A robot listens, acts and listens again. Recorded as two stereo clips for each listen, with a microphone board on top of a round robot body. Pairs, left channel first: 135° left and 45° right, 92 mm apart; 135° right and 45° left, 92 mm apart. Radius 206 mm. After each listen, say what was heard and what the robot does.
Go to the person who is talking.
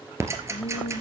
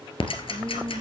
The woman speaking: 150° left. Turn 150° left.
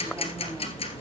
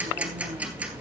Keep listening.
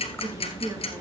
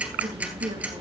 The woman speaking is now 15° left. Turn 15° left.
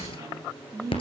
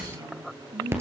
Drive 1.0 m forward.
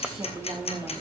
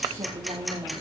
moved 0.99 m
Drive 1.0 m forward.
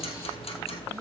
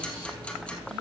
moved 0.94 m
The woman speaking is now 10° left. Turn 10° left.
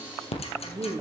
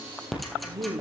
Drive 1.0 m forward.
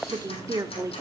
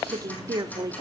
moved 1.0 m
Drive 1.0 m forward.
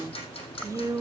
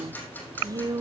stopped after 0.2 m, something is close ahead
Arrived at the woman speaking, straight ahead.